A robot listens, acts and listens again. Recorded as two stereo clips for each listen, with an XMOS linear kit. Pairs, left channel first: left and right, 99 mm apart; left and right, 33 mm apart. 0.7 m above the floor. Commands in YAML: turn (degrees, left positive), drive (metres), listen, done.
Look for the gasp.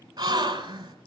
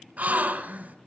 turn: -45
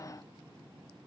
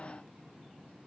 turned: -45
listen: true
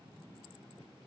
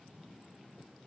done: "I heard a gasp, but can't make it out now. It was about straight ahead or 90° right."